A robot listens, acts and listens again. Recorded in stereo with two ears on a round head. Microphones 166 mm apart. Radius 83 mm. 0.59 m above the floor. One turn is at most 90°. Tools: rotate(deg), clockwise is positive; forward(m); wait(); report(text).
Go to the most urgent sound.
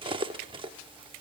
wait()
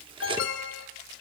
rotate(-70)
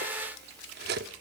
wait()
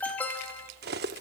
rotate(-10)
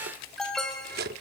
forward(1.0)
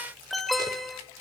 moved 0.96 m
forward(1.0)
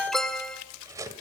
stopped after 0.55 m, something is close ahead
report("I am next to the alarm.")